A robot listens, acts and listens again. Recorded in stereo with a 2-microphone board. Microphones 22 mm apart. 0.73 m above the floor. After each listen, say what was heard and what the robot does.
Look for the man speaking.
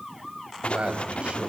The man speaking: about 60° right or 120° right. Turn 60° right.
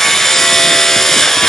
Keep listening.
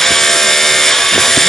Keep listening.
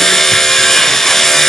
I heard a man speaking, but can't make it out now. It was about straight ahead or 60° right.